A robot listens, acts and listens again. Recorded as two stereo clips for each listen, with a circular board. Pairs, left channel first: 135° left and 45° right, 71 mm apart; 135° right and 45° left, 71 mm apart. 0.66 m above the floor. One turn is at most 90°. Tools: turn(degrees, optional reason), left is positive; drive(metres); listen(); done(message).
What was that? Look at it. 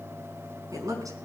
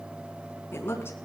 turn(degrees=-80, reason="The woman speaking: 80° right.")
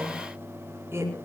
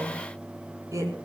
turn(degrees=10, reason="The woman speaking is now 10° left.")
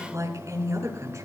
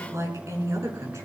done("Found it: a woman speaking, straight ahead, over 4 m away.")